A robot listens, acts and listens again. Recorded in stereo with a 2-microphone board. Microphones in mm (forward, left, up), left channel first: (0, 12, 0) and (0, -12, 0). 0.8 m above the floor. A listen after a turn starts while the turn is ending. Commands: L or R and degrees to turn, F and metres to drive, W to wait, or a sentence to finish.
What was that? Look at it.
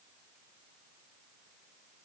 W
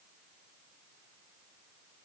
W
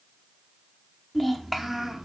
R15
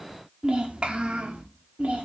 R115
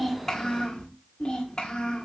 L40
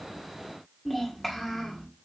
Facing the child speaking.